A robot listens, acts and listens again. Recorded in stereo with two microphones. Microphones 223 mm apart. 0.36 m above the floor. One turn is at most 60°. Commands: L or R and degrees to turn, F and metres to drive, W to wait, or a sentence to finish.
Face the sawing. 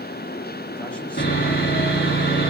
L45
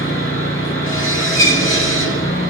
L60
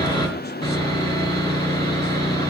L20
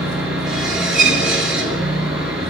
Facing the sawing, over 4 m away.